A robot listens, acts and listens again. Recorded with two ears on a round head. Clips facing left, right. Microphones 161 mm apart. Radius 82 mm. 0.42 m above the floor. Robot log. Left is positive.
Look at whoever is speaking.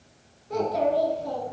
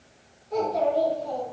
note: The child speaking: about 70° left or 110° left.
cmd yaw +70
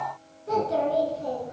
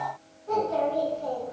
note: So it is at 35° left.
cmd yaw +35
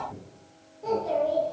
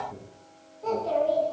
end: Found it: a child speaking, straight ahead.